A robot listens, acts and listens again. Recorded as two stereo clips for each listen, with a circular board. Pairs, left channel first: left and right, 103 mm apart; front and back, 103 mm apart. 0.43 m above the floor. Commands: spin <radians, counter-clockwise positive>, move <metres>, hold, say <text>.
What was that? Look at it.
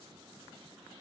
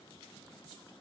hold
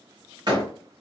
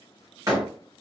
spin -2.27
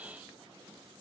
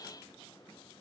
say Facing where the door slam came from. I can't hear it now.